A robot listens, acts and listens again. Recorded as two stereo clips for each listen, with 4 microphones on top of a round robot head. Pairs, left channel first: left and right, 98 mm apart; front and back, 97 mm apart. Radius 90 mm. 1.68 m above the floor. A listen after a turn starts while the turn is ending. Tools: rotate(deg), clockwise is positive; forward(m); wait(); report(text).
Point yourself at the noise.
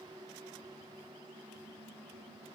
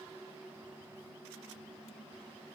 wait()
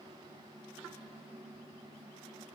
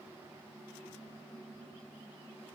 wait()
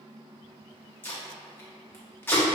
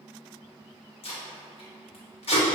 rotate(-20)
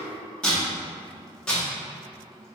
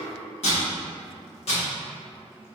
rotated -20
rotate(-10)
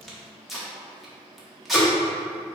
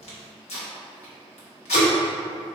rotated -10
report("Facing the tape being pulled.")